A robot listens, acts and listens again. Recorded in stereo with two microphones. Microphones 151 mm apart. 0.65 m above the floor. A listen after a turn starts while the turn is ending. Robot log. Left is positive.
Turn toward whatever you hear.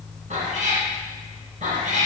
note: The cat meowing: about 55° right or 125° right.
cmd yaw -55
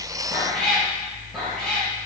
end: Found it: a cat meowing, straight ahead, 2 to 4 m away.